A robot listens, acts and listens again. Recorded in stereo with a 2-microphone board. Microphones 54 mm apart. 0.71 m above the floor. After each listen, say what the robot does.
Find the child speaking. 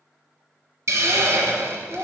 Turn 25° right.
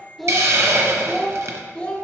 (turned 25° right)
Turn 25° left.
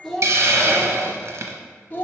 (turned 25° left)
Turn 30° left.
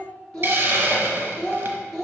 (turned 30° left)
Turn 15° left.
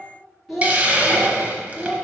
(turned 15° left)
Facing the child speaking, 1 to 2 m away.